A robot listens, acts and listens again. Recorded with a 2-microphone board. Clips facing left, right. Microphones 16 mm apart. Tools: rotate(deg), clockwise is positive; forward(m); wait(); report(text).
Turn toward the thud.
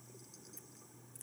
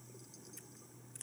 wait()
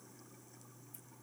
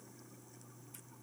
wait()
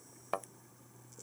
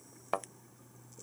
rotate(30)
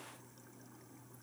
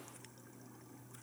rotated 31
wait()
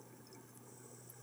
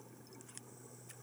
report("I heard a thud, but can't make it out now. It was about 20° left or 140° right.")